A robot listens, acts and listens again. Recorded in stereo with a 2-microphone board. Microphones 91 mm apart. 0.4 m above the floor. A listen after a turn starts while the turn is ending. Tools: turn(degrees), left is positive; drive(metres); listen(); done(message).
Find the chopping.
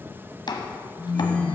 turn(degrees=55)
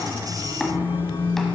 listen()
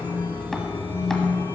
listen()
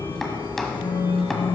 done("I heard chopping, but can't make it out now. It was about straight ahead or 70° left.")